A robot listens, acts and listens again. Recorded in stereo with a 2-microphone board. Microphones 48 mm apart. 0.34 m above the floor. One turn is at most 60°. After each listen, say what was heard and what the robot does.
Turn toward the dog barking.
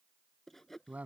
Keep listening.
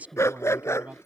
Turn 60° left.
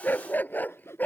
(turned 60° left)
So it is at 40° left. Turn 40° left.
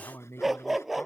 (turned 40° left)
Facing the dog barking.